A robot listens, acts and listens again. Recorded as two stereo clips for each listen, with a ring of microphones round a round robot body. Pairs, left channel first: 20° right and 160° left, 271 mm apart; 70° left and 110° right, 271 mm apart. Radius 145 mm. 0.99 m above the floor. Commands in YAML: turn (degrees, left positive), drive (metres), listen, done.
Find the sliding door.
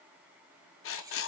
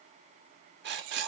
listen: true
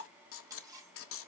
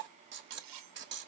listen: true
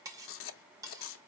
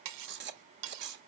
done: "I can't make out a sliding door to turn to."